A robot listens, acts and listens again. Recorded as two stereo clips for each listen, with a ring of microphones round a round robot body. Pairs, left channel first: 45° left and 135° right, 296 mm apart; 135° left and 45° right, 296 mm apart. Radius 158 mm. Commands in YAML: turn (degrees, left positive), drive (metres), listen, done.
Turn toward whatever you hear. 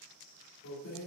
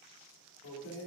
turn: 95
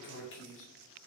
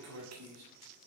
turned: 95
done: "Facing the keys jangling."